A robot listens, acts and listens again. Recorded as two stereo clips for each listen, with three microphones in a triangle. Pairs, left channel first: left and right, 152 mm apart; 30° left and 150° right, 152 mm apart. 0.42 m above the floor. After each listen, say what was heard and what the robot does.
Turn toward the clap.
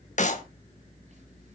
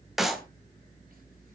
The clap: 120° left. Turn 120° left.
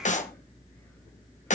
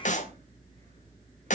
The clap is now 60° left. Turn 60° left.
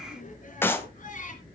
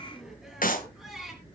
The clap is now 15° left. Turn 15° left.
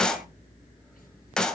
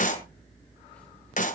Found it: a clap, straight ahead, 1 to 2 m away.